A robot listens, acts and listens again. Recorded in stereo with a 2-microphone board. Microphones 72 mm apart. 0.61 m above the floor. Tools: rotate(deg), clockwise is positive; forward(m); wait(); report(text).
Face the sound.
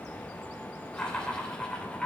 rotate(-30)
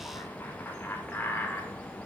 rotate(-155)
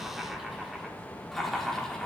rotate(-10)
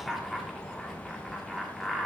report("Facing the laughter.")